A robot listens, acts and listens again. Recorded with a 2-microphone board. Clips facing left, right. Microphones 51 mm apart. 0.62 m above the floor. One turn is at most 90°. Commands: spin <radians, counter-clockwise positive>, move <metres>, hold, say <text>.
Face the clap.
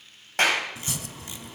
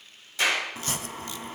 spin 0.96
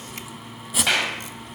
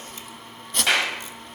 say Facing the clap.